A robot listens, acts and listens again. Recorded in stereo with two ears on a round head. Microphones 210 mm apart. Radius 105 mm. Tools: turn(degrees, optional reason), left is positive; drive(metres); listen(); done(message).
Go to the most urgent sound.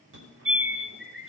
turn(degrees=-55, reason="The fire alarm: about 55° right or 125° right.")
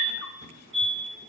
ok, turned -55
turn(degrees=-65, reason="So it is at 65° right.")
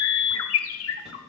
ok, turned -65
drive(metres=1.0)
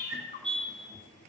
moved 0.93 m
drive(metres=1.0)
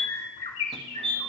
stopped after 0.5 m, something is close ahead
done("I am next to the fire alarm.")